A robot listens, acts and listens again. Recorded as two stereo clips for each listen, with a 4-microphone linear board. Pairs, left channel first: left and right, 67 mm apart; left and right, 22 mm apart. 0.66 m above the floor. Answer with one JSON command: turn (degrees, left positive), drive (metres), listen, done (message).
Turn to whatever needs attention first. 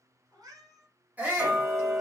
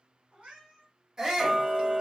{"turn": -25}
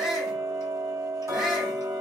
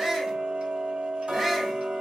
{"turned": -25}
{"done": "Found it: a shout, straight ahead, 1 to 2 m away."}